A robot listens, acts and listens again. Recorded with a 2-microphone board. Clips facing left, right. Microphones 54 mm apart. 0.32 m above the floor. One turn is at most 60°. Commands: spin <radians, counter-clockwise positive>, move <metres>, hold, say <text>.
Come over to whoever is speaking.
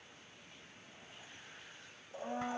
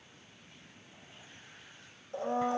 hold
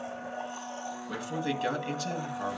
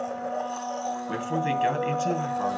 spin -0.61
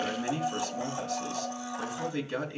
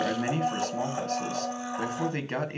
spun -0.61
spin -1.05
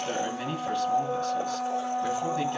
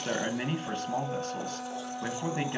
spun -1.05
spin -0.70
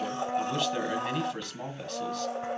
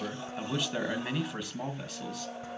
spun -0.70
move 1.0
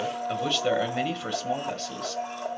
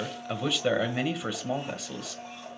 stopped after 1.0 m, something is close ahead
spin -0.17
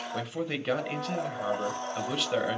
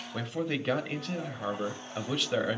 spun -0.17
say Arrived at the man speaking, straight ahead.